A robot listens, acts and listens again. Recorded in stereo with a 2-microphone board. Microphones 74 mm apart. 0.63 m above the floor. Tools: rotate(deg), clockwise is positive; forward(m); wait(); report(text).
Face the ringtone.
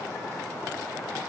wait()
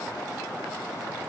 wait()
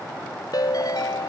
rotate(-65)
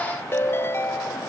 rotate(-40)
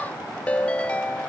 rotate(-20)
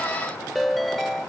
report("Found it: a ringtone, straight ahead.")